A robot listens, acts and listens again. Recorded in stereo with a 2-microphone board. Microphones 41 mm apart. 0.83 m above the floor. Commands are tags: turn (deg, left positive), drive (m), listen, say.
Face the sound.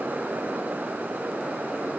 <listen/>
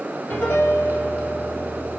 <turn deg="75"/>
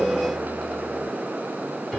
<say>Found it: a piano, straight ahead, 1 to 2 m away.</say>